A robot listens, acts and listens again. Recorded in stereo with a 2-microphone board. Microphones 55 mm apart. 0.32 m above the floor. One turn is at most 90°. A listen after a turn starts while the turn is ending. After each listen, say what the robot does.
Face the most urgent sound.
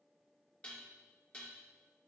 Keep listening.
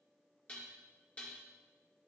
Keep listening.
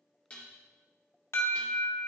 Turn 55° left.
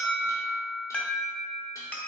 Turn 30° left.
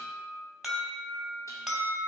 Facing the alarm.